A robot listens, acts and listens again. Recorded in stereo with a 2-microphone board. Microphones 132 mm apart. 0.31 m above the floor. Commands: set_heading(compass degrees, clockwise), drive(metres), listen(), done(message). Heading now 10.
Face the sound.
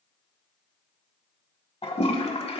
set_heading(320)
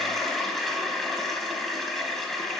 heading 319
done("Facing the toilet flushing, under 1 m away.")